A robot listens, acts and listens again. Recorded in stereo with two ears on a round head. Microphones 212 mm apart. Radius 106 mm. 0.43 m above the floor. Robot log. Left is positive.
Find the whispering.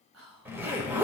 note: The whispering: about 65° right or 115° right.
cmd yaw -65
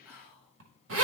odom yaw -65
note: So it is at 10° right.
cmd yaw -10
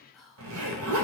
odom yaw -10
end: Found it: whispering, straight ahead, 2 to 4 m away.